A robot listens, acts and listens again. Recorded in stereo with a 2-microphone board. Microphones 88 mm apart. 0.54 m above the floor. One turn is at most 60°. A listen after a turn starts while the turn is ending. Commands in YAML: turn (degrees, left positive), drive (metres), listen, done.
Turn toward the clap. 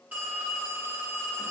listen: true
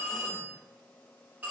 listen: true
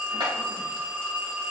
turn: -60
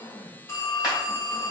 turn: -15
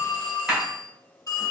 done: "Found it: a clap, straight ahead."